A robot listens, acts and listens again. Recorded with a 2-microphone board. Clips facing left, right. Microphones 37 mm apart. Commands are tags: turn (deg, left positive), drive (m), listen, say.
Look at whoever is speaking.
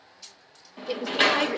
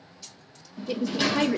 <turn deg="30"/>
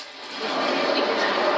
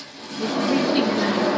<listen/>
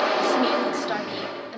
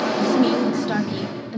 <turn deg="30"/>
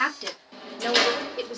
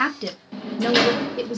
<turn deg="30"/>
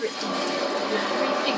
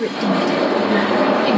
<turn deg="-20"/>
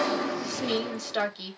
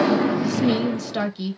<say>Facing the woman speaking.</say>